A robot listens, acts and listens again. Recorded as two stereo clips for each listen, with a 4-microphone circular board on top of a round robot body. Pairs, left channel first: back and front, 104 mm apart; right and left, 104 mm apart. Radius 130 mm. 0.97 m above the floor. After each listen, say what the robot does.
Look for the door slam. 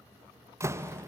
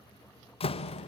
Turn 65° right.
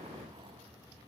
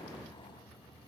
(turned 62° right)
I heard a door slam from this way, but can't make it out now.